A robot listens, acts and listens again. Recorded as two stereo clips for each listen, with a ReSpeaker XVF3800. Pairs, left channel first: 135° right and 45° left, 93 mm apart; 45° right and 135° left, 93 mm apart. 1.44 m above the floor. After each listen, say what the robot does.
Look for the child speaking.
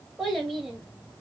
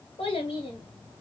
Turn 40° right.
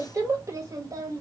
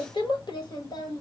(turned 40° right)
Found it: a child speaking, straight ahead.